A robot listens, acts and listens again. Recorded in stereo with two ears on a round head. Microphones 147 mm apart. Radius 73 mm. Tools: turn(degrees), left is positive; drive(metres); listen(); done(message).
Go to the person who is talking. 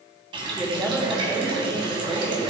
turn(degrees=-30)
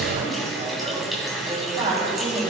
turn(degrees=-135)
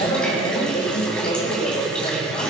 turn(degrees=40)
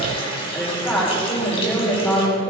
turn(degrees=10)
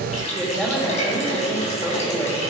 drive(metres=1.0)
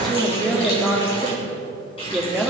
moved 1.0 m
drive(metres=1.0)
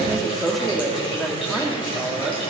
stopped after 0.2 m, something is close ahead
done("Arrived at the woman speaking, straight ahead.")